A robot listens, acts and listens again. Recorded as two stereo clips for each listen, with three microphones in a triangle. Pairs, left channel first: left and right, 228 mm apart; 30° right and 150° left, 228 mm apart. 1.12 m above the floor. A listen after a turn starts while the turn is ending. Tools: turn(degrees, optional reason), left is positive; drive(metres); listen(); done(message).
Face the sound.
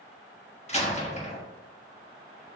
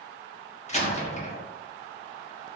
turn(degrees=30, reason="The door slam: 30° left.")
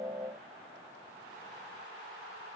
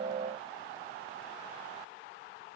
done("I heard a door slam from this way, but can't make it out now.")